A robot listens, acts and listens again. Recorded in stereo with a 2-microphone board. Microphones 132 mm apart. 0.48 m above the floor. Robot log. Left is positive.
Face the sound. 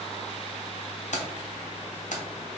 note: The keys jangling: about 70° left or 110° left.
cmd yaw +70
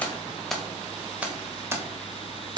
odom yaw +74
note: So it is at 35° right.
cmd yaw -35
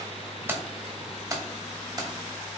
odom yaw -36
note: The keys jangling is now 30° right.
cmd yaw -30
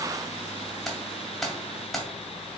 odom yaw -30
end: Facing the keys jangling.